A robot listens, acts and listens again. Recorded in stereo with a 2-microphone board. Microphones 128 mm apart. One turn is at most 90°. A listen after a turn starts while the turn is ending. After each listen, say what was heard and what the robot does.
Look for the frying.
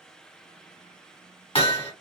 Keep listening.
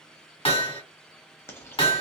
The frying: about 20° left or 160° left. Turn 20° left.
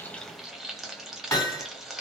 Facing the frying.